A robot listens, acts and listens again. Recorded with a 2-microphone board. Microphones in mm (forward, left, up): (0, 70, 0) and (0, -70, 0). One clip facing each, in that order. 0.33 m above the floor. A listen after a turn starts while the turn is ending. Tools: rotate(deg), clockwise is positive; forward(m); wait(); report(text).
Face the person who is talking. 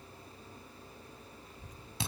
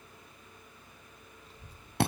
rotate(30)
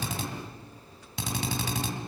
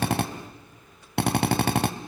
wait()
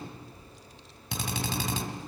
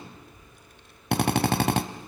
rotate(120)
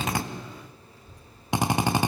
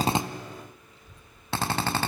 rotate(25)
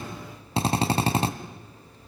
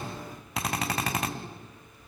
rotate(10)
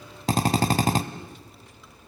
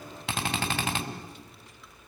wait()
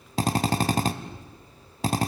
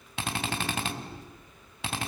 report("Facing the child speaking, 2 to 4 m away.")